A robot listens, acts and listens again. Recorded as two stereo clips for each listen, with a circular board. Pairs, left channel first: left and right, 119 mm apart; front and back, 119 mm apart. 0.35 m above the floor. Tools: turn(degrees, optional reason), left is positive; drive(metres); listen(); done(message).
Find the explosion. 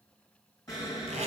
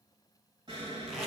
turn(degrees=145, reason="The explosion: 145° left.")
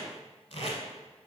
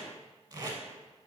done("Facing where the explosion came from. I can't hear it now.")